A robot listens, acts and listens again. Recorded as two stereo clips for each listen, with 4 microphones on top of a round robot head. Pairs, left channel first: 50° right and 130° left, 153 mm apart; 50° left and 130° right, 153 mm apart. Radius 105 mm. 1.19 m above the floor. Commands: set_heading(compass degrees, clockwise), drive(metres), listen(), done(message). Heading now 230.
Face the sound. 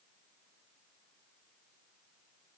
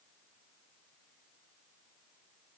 listen()
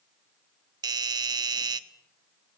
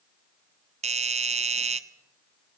set_heading(40)
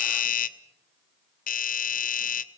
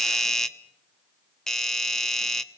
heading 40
set_heading(75)
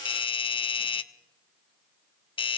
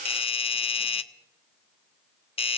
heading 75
done("Found it: a doorbell, straight ahead.")